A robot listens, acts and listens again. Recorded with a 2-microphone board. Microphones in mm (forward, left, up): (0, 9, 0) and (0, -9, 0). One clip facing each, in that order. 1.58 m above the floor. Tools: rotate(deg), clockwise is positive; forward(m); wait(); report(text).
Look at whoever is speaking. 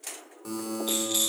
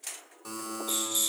wait()
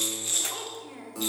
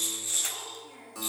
rotate(-25)
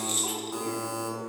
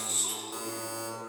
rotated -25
wait()
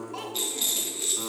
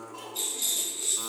rotate(-125)
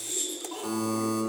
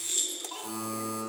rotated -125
wait()
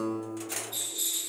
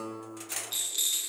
wait()
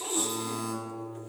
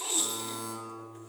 report("I heard a child speaking from this way, but can't make it out now.")